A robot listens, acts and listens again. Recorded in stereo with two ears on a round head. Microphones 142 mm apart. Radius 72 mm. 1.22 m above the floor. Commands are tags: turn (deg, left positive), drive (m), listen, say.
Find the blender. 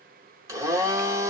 <turn deg="-20"/>
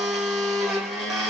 <say>Found it: a blender, straight ahead.</say>